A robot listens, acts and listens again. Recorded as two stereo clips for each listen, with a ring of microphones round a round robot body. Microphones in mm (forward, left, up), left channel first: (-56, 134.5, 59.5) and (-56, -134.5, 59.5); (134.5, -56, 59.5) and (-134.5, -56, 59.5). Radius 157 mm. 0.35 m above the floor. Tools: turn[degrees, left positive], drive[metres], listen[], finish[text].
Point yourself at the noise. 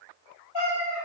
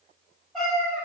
Thought: The cat meowing: 85° left.
Action: turn[85]
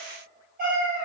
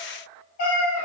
Thought: The cat meowing is now 35° right.
Action: turn[-35]
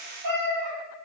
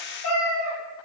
Thought: The cat meowing is now 35° right.
Action: turn[-35]
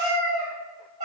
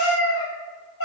Thought: The cat meowing is now 45° right.
Action: turn[-45]
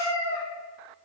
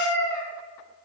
Action: finish[Facing the cat meowing.]